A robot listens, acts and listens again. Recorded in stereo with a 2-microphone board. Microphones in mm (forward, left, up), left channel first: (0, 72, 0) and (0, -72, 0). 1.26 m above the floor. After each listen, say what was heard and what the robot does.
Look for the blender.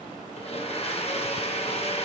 The blender: about 45° left or 135° left. Turn 45° left.
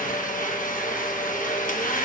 So it is at 85° left. Turn 85° left.
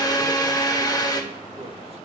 The blender is now 30° left. Turn 30° left.
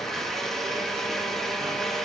Facing the blender.